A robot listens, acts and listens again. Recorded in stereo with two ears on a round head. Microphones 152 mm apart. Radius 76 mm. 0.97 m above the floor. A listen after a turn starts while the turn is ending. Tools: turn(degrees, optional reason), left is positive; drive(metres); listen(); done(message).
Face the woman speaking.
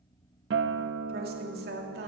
turn(degrees=-65, reason="The woman speaking: about 65° right or 115° right.")
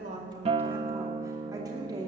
turn(degrees=-25, reason="So it is at 25° right.")
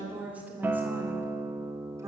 turn(degrees=-20, reason="The woman speaking is now 20° right.")
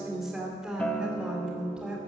done("Facing the woman speaking, 2 to 4 m away.")